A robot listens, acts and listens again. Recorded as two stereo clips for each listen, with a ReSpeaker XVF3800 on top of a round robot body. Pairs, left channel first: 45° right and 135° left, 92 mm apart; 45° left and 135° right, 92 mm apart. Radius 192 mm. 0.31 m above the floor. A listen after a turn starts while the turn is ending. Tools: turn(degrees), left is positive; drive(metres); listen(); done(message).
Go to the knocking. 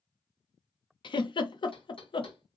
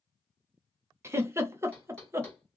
turn(degrees=-30)
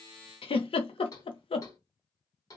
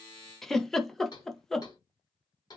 drive(metres=1.0)
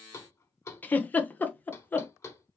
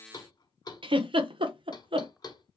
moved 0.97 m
turn(degrees=10)
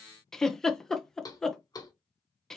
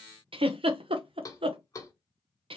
drive(metres=1.0)
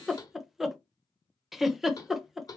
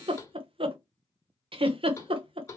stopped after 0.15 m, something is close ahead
done("I am next to the knocking.")